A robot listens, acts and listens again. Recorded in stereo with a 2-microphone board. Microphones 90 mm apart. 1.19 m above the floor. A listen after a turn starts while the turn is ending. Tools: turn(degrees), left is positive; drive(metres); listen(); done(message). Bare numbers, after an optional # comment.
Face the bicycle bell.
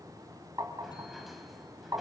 listen()
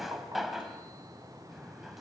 listen()
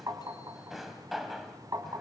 done("I can't make out a bicycle bell, only a drawer and tapping.")